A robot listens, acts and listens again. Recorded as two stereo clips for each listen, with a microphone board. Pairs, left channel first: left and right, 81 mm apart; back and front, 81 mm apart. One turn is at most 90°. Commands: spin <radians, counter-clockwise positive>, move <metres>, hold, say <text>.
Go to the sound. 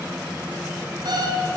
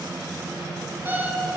spin -1.13
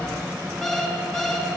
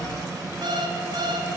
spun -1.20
move 1.0
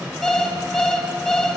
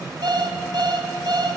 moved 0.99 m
spin 0.17
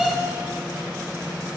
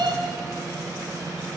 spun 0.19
move 1.0
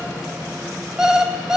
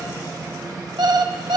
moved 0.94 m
move 1.0
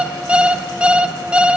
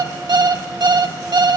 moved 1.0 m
spin -0.26
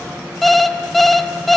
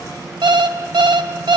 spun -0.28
move 1.0
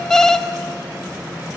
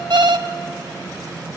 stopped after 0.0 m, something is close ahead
spin 0.17
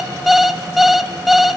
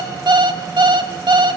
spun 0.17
say Arrived at the alarm clock, straight ahead.